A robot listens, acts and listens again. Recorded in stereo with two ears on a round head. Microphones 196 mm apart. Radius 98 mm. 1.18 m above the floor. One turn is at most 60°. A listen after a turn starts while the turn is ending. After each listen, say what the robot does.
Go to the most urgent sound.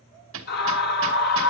Turn 45° left.
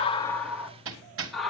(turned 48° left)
Drive 1.0 m forward.
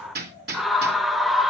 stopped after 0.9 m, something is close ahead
I am next to the scream.